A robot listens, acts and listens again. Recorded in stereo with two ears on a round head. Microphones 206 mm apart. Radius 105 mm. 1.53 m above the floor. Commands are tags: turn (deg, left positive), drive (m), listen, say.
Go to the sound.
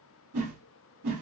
<turn deg="-90"/>
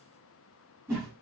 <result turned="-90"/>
<turn deg="-10"/>
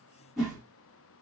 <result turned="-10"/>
<drive m="1.0"/>
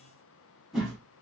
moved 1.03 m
<drive m="1.0"/>
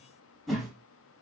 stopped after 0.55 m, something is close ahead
<say>Arrived at the whoosh, straight ahead.</say>